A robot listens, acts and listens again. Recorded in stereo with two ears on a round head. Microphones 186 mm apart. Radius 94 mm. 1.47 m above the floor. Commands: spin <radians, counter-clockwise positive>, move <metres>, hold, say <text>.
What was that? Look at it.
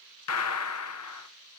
spin 1.57
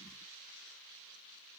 say I heard a gunshot from this way, but can't make it out now.